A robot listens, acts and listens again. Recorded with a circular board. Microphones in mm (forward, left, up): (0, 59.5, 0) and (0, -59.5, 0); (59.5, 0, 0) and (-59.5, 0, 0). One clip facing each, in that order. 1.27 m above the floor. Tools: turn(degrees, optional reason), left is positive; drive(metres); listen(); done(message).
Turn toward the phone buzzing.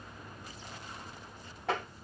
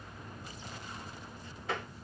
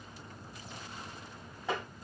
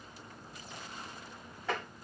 listen()
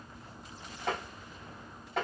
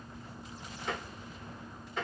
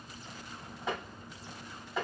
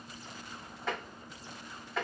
listen()
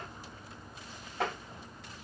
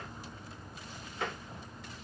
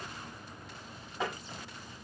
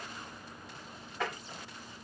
done("I can't make out a phone buzzing, only tapping.")